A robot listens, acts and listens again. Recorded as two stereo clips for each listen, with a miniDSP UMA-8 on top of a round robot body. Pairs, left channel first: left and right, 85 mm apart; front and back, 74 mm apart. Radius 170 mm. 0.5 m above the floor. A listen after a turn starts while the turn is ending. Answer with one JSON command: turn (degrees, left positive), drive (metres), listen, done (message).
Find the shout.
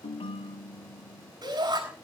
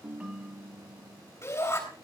{"turn": -45}
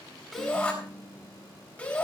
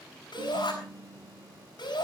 {"turn": 20}
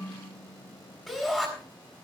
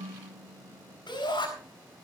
{"done": "Facing the shout, over 4 m away."}